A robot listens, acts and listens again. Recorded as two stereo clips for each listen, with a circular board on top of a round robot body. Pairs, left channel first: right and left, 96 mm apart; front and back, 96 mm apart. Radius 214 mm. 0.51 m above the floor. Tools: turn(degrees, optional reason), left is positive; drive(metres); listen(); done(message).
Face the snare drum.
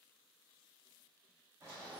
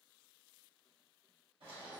listen()
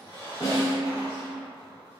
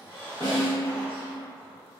turn(degrees=-135, reason="The snare drum: 135° right.")
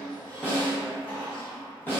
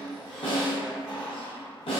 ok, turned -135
turn(degrees=-20, reason="The snare drum is now 20° right.")
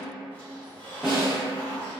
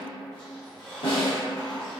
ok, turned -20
done("Found it: a snare drum, straight ahead.")